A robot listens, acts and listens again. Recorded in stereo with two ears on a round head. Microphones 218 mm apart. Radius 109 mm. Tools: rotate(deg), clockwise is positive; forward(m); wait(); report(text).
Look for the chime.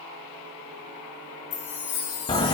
rotate(-60)
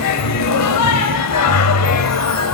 wait()
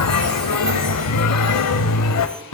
wait()
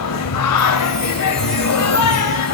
report("I heard a chime, but can't make it out now. It was about straight ahead or 60° left.")